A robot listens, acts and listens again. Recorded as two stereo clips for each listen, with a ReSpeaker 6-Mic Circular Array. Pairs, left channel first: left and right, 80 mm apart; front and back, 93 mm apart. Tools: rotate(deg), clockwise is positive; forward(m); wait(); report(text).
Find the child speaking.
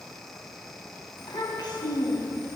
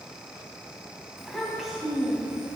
rotate(-105)
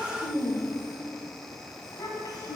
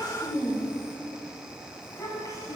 rotate(-55)
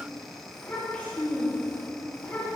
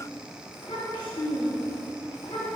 rotate(-25)
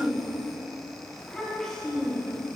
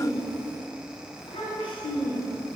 report("Facing the child speaking, 2 to 4 m away.")